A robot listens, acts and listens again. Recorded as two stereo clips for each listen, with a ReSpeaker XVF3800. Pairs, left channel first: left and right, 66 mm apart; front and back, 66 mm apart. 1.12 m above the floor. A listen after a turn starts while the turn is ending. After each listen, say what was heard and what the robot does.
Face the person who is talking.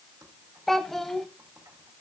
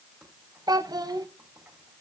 The child speaking: 175° left. Turn 175° left.
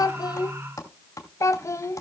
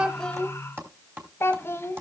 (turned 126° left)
The child speaking is now 50° left. Turn 50° left.
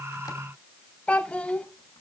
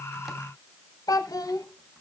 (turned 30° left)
The child speaking is now 20° left. Turn 20° left.
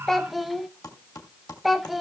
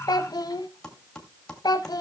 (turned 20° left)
Found it: a child speaking, straight ahead, under 1 m away.